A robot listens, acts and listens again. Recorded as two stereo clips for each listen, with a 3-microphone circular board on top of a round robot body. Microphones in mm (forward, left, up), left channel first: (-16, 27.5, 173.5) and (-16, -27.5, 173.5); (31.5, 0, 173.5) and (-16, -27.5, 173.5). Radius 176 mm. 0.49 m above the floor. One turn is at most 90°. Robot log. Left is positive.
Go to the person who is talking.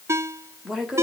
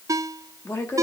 cmd fwd 1.0
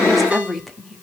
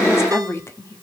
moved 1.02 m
cmd fwd 1.0
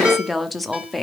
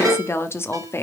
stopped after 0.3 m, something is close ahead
end: Arrived at the woman speaking, straight ahead.